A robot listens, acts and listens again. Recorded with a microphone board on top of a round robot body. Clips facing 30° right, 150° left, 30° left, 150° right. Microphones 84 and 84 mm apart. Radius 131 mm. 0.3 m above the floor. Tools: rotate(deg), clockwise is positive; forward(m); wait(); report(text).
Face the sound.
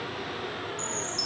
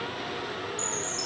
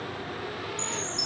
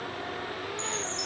rotate(-45)
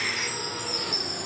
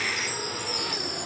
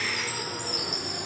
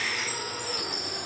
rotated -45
report("Facing the chime, 1 to 2 m away.")